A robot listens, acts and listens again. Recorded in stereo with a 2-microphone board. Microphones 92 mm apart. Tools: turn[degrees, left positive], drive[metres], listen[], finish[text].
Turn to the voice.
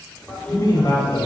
Thought: The man speaking: about 50° left or 130° left.
Action: turn[50]
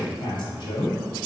Thought: So it is at 75° left.
Action: turn[75]
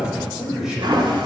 Thought: The man speaking is now 10° right.
Action: turn[-10]
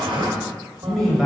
Action: finish[Facing the man speaking, 1 to 2 m away.]